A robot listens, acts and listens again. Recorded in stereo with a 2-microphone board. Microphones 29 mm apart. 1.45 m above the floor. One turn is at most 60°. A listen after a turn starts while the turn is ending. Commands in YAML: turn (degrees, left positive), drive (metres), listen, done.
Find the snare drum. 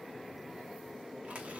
listen: true
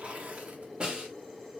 turn: -35
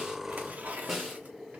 done: "Found it: a snare drum, straight ahead, 1 to 2 m away."